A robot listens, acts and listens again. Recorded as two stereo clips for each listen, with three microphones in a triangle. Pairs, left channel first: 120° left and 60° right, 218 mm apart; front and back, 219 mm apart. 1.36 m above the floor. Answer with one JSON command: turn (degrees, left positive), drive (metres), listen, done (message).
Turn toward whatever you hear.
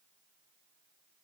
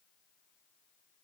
{"listen": true}
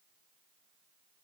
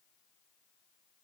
{"listen": true}
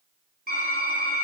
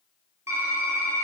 {"turn": -105}
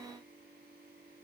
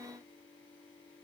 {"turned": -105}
{"listen": true}
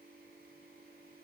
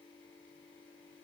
{"listen": true}
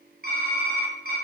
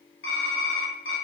{"turn": -15}
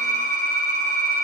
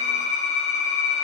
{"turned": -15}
{"turn": -10}
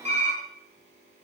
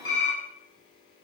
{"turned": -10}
{"done": "Found it: typing on a keyboard, straight ahead, 2 to 4 m away."}